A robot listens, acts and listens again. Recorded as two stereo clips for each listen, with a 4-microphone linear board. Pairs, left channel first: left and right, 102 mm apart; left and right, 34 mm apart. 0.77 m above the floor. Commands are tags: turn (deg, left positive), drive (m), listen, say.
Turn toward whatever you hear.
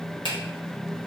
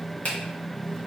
<turn deg="55"/>
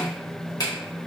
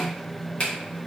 <turn deg="50"/>
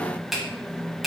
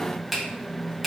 <say>Found it: a finger snap, straight ahead, 1 to 2 m away.</say>